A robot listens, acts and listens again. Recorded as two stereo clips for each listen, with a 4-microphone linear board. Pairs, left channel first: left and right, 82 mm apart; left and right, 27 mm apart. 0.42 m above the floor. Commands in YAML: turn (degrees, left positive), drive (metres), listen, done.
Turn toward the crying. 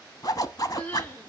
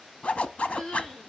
turn: 20
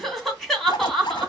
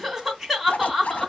done: "Facing the crying, 2 to 4 m away."